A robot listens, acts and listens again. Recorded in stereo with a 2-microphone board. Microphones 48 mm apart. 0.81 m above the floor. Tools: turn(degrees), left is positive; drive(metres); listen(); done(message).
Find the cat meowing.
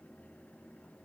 listen()
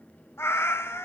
turn(degrees=75)
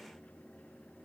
listen()
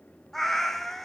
done("Found it: a cat meowing, straight ahead, 1 to 2 m away.")